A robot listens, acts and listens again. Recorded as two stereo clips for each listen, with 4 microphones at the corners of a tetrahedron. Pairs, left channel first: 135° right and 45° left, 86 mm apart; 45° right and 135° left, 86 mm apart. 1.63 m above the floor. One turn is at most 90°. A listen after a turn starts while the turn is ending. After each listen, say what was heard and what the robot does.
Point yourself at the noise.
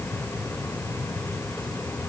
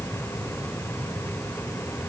Keep listening.
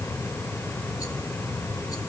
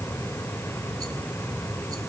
Keep listening.
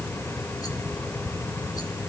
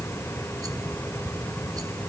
I can't make out anything.